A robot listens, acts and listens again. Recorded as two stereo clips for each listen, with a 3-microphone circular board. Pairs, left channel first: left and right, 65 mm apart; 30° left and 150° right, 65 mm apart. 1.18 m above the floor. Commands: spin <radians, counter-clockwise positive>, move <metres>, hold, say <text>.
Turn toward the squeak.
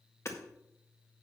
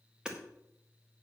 hold
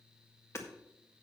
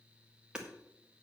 hold
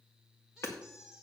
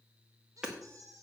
spin -2.97
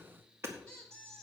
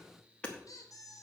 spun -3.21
spin 0.26
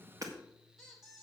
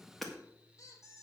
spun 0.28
say Found it: a squeak, straight ahead, 2 to 4 m away.